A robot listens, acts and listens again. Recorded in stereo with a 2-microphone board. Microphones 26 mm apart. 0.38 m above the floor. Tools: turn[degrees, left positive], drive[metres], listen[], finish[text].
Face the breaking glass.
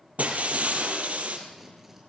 Thought: The breaking glass: about 60° right or 120° right.
Action: turn[-60]
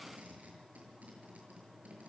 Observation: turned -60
Action: listen[]
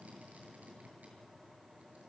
Action: finish[I heard breaking glass, but can't make it out now. It was about straight ahead or 60° right.]